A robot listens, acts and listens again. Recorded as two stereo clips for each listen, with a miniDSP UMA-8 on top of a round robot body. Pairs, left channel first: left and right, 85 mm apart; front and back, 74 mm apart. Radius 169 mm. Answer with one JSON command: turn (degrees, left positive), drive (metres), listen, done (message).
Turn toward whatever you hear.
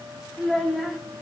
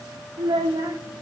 {"turn": 180}
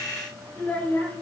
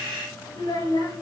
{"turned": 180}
{"turn": 20}
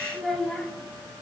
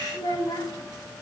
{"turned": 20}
{"done": "Found it: a child speaking, straight ahead."}